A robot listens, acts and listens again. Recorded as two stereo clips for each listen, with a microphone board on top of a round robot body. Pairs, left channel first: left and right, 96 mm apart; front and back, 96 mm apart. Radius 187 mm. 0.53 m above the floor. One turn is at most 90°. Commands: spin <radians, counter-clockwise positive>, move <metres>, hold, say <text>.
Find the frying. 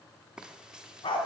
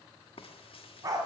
spin -0.17
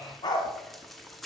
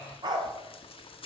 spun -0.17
say Found it: frying, straight ahead.